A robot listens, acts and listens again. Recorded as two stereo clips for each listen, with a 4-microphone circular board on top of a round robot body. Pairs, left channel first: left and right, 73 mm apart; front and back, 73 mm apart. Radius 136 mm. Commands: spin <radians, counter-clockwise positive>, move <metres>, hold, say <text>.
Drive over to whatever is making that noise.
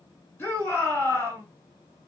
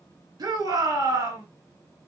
spin 2.62
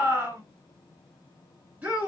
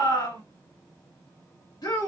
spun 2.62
spin -0.35
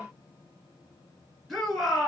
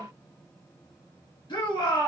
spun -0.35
move 1.0
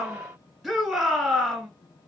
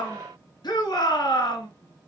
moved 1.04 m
move 1.0
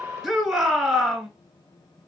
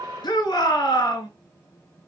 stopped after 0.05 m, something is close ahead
say Arrived at the shout, straight ahead.